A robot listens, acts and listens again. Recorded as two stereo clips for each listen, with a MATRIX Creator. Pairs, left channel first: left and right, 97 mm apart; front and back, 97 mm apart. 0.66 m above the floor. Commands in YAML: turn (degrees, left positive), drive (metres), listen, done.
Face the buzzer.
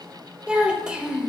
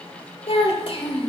listen: true
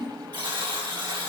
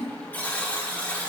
turn: -70
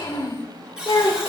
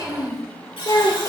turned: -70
turn: -10
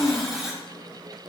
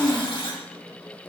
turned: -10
done: "Found it: a buzzer, straight ahead, 1 to 2 m away."